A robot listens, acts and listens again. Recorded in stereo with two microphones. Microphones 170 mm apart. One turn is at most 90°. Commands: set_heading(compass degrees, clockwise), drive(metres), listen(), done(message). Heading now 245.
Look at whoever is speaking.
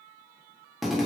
listen()
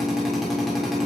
listen()
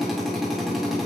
done("I can't make out anyone speaking to turn to.")